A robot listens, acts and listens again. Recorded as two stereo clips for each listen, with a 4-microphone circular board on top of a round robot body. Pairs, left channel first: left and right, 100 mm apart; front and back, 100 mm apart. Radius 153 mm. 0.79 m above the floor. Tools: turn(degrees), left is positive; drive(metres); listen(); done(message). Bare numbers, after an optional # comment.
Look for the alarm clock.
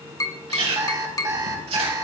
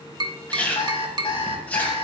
# The alarm clock: 35° right.
turn(-35)
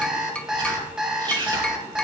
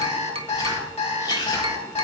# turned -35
done("Facing the alarm clock.")